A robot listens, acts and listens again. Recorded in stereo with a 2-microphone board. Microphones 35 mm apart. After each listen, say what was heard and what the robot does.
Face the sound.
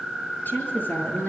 The woman speaking: about 60° left or 120° left. Turn 60° left.
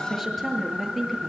Facing the woman speaking.